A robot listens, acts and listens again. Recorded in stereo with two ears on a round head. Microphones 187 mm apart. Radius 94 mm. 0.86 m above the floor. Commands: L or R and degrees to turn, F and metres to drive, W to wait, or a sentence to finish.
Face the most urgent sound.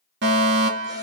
R60
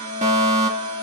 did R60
R40
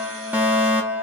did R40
R10
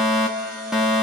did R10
Facing the fire alarm, 2 to 4 m away.